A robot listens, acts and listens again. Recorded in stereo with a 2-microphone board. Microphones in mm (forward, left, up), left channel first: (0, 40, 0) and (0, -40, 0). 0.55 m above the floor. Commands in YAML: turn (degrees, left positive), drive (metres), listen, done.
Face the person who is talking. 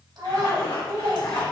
turn: -60
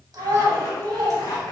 turn: -55
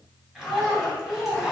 done: "Found it: a child speaking, straight ahead."